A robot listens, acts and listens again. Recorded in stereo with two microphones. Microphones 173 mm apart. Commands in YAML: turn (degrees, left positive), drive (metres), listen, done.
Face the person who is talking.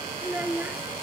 turn: -30
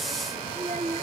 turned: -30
turn: -135
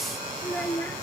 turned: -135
turn: 10
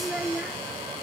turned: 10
done: "Facing the child speaking."